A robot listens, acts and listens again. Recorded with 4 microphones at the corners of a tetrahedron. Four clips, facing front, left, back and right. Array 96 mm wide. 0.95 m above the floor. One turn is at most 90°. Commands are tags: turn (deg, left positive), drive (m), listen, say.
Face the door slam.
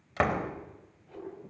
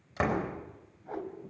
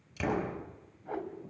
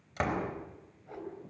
<turn deg="10"/>
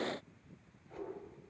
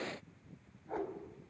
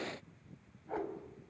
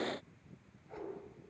<say>I heard a door slam from this way, but can't make it out now.</say>